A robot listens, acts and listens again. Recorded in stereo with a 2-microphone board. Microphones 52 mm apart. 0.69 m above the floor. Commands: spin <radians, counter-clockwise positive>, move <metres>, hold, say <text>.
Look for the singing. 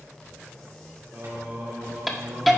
spin -0.87
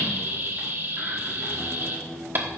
say Found it: singing, straight ahead.